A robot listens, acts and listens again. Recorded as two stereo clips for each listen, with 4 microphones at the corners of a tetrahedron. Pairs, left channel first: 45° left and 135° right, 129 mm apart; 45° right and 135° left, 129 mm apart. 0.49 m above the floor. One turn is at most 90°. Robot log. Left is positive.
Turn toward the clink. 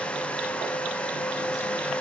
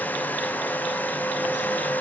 cmd idle
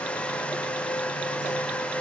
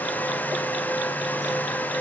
cmd idle
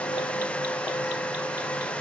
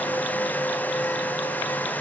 end: I can't make out a clink to turn to.